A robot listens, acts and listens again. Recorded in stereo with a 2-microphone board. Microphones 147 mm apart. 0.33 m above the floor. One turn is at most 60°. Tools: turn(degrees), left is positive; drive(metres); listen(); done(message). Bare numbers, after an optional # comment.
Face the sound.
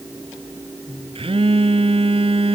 # The phone buzzing: about 40° right or 140° right.
turn(-40)
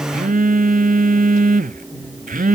# So it is at 100° right.
turn(-60)
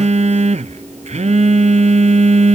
# The phone buzzing is now 55° right.
turn(-55)
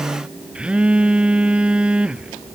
done("Found it: a phone buzzing, straight ahead.")